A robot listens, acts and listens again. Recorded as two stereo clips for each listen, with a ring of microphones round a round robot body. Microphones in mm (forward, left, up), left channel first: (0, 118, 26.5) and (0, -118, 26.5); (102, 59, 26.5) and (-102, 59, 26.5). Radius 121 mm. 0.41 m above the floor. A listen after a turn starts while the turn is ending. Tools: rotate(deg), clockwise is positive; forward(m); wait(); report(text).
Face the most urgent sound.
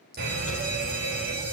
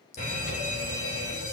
rotate(50)
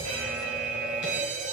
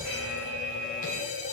report("Facing the fire alarm, 2 to 4 m away.")